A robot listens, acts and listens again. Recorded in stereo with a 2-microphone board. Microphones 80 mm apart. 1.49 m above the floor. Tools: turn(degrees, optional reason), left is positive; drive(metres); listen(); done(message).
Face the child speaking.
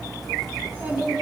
turn(degrees=-25, reason="The child speaking: about 25° right or 155° right.")
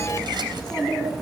done("Facing the child speaking, over 4 m away.")